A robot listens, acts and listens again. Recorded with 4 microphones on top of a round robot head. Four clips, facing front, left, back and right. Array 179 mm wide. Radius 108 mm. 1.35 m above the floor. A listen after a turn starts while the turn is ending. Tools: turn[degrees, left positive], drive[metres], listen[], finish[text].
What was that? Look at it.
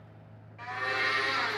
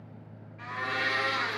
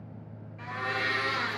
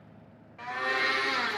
Thought: The blender: 90° right.
Action: turn[-90]
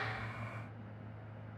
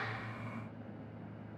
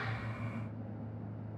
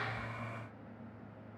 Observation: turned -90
Action: listen[]
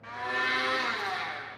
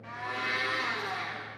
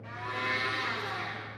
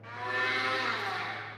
Action: finish[Facing the blender, 2 to 4 m away.]